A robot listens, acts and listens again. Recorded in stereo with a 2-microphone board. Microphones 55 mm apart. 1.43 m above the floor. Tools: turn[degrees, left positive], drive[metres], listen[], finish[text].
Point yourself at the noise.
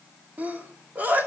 Thought: The sneeze: about 35° right or 145° right.
Action: turn[-35]
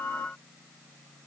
Action: listen[]
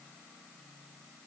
Action: finish[I heard a sneeze, but can't make it out now. It was about straight ahead or 110° right.]